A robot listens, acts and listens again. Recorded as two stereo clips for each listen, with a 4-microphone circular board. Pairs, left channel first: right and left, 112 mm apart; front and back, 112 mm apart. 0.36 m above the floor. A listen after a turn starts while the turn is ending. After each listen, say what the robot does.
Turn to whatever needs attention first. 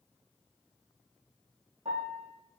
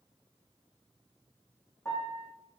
Keep listening.
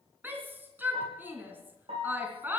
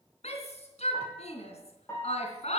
Turn 15° left.
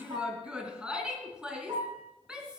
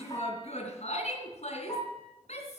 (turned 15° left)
Turn 10° left.
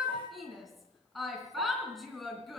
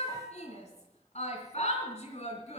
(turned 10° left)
Facing the shout.